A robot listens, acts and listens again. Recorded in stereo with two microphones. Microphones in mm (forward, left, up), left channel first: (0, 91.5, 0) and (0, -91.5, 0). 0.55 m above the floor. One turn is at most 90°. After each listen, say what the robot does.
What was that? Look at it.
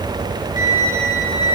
Turn 45° left.
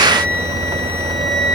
Turn 90° left.
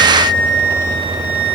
Facing the flute.